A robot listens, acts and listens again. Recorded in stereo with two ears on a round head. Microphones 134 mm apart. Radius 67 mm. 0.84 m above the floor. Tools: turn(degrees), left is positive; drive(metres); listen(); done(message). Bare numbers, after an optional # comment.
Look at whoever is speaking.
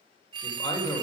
# The man speaking: about 30° left or 150° left.
turn(30)
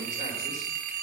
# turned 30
listen()
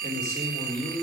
# So it is at 135° left.
turn(135)
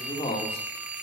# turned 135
# The man speaking is now 35° left.
turn(35)
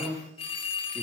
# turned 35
done("Found it: a man speaking, straight ahead, 2 to 4 m away.")